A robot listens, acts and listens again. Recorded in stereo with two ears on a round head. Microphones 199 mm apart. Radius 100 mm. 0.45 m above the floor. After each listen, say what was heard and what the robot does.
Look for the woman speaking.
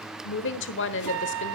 The woman speaking: about 60° left or 120° left. Turn 60° left.
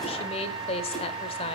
So it is at 30° left. Turn 30° left.
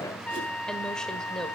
Keep listening.
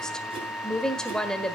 Found it: a woman speaking, straight ahead.